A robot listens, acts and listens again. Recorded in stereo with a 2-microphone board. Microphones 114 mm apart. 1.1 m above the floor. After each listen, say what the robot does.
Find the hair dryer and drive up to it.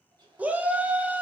Turn 40° right.
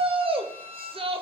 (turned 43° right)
Keep listening.
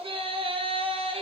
Keep listening.
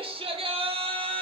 I heard a hair dryer, but can't make it out now. It was about 5° left or 100° right. I did not reach it.